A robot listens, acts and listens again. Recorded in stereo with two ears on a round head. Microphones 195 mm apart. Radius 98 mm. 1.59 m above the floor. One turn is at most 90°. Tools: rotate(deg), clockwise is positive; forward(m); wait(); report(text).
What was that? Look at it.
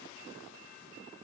wait()
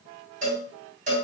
rotate(40)
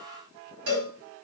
rotate(90)
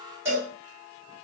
rotate(10)
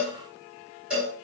report("Found it: a cowbell, straight ahead.")